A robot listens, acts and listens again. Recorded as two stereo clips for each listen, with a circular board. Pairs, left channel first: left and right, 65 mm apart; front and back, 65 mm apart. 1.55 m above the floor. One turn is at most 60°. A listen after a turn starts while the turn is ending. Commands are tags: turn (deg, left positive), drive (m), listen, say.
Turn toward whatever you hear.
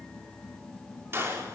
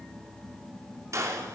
<turn deg="-60"/>
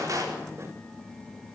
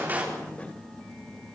<turn deg="-60"/>
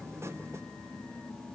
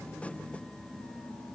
<turn deg="-20"/>
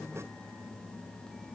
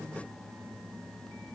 <say>Facing where the gunshot came from. I can't hear it now.</say>